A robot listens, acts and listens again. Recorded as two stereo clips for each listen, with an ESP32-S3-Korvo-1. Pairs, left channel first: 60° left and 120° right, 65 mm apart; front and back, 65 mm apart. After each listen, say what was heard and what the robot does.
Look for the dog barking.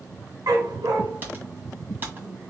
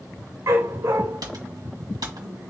The dog barking: 140° right. Turn 140° right.
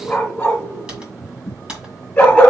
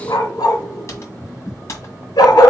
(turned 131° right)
The dog barking is now 10° right. Turn 10° right.
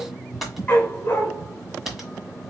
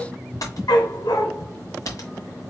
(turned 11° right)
Facing the dog barking.